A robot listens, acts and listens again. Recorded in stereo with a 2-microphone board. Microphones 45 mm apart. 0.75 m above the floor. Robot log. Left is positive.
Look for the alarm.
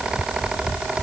cmd idle
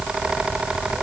cmd idle
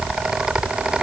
end: I can't make out an alarm to turn to.